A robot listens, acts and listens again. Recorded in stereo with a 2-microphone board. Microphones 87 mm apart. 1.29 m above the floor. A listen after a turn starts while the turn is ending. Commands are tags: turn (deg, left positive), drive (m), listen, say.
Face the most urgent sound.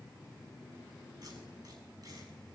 <listen/>
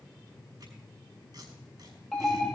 <turn deg="30"/>
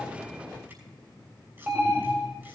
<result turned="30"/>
<turn deg="-30"/>
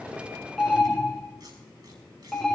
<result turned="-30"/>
<say>Facing the alarm, 2 to 4 m away.</say>